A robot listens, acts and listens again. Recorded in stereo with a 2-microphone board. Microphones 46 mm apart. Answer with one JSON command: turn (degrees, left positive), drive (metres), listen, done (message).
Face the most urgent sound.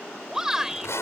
{"turn": -30}
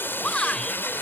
{"turn": 20}
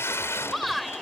{"done": "Found it: a shout, straight ahead."}